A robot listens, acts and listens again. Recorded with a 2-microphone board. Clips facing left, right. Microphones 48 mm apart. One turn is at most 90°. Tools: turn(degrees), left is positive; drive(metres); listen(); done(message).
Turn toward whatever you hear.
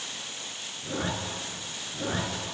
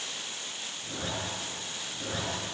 turn(degrees=25)
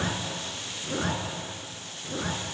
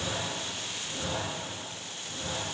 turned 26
turn(degrees=90)
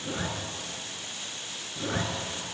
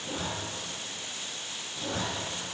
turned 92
turn(degrees=35)
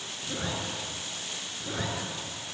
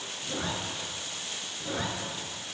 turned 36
done("Facing the zipper.")